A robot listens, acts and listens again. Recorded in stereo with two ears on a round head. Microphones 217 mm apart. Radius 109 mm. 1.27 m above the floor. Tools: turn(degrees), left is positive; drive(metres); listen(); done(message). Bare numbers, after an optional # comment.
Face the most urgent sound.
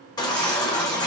# The baby crying: about 15° left or 165° left.
turn(15)
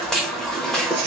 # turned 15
done("Facing the baby crying, under 1 m away.")